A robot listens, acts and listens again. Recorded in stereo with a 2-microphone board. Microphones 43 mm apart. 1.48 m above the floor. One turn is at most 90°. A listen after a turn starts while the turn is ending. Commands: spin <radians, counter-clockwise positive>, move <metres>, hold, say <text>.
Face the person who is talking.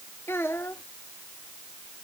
spin 1.31
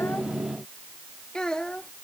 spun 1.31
spin 0.35
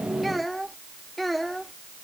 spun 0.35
say Facing the child speaking.